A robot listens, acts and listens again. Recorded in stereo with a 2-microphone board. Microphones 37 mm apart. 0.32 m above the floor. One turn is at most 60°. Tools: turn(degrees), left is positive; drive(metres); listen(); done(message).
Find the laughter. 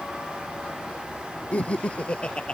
turn(degrees=30)
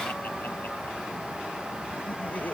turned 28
listen()
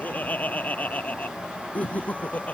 turn(degrees=40)
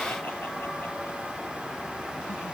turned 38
listen()
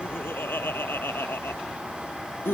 turn(degrees=60)
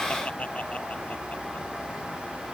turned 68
turn(degrees=35)
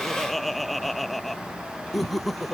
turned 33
done("Facing the laughter.")